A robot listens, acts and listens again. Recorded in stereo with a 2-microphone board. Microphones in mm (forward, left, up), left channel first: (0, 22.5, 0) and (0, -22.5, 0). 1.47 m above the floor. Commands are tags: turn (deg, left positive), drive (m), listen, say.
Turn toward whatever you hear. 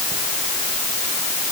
<listen/>
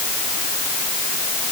<listen/>
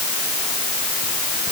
<say>I can't make out anything.</say>